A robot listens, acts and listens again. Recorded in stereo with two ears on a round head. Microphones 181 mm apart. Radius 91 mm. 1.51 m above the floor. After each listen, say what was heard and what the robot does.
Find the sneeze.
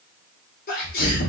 The sneeze: about 50° left or 130° left. Turn 50° left.
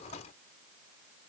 Keep listening.
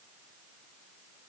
I heard a sneeze, but can't make it out now. It was about straight ahead or 80° left.